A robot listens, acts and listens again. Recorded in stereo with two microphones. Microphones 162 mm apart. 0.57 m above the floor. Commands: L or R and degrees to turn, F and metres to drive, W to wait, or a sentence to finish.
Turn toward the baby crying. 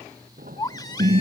L25
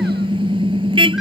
W
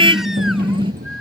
W
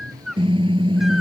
Found it: a baby crying, straight ahead.